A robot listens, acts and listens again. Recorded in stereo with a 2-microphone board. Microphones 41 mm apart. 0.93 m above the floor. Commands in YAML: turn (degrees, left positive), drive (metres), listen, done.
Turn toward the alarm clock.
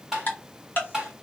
listen: true
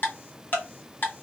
listen: true
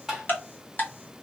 done: "I can't make out an alarm clock to turn to."